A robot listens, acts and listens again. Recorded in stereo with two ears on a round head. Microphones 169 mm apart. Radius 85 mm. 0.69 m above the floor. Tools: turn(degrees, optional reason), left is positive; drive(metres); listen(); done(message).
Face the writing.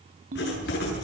turn(degrees=60, reason="The writing: about 60° left or 120° left.")
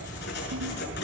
turn(degrees=60, reason="So it is at 60° left.")
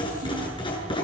turn(degrees=25, reason="The writing is now 25° left.")
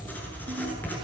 turn(degrees=10, reason="The writing is now 10° left.")
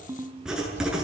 done("Facing the writing.")